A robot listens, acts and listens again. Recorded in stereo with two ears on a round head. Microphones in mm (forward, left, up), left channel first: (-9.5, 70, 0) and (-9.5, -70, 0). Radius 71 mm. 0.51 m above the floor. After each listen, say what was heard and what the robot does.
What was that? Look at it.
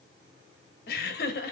The laughter: about 65° left or 115° left. Turn 65° left.
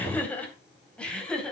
Found it: laughter, straight ahead.